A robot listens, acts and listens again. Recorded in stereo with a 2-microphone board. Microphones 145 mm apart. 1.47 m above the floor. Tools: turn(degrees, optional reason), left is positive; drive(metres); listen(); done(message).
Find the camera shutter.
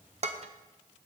listen()
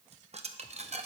listen()
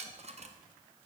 done("I can't make out a camera shutter to turn to.")